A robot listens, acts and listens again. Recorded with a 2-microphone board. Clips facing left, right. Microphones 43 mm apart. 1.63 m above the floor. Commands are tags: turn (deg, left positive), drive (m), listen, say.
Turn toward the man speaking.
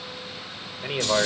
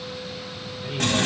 <turn deg="50"/>
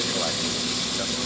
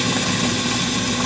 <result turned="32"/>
<listen/>
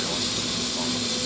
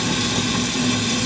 <listen/>
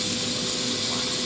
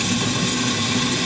<say>I heard a man speaking, but can't make it out now. It was about 15° left or 100° left.</say>